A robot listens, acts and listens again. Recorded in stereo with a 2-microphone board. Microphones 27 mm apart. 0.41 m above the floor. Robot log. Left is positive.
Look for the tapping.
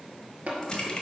note: The tapping: about 55° right or 125° right.
cmd yaw -55
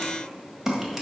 cmd idle
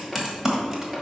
cmd idle
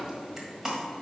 end: I heard tapping, but can't make it out now. It was about straight ahead or 70° right.